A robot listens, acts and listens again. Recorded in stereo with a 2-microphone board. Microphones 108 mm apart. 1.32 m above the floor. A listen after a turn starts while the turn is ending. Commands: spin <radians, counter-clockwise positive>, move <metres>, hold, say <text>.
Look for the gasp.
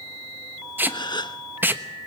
spin 0.70
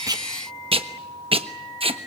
hold
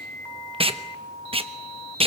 say I heard a gasp, but can't make it out now. It was about straight ahead or 100° left.